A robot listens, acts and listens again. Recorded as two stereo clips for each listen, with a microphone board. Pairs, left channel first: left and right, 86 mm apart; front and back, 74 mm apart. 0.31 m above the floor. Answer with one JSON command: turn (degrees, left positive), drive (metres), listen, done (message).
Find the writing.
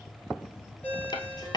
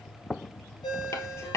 {"turn": 50}
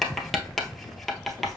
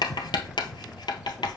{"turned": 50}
{"done": "Found it: writing, straight ahead, 1 to 2 m away."}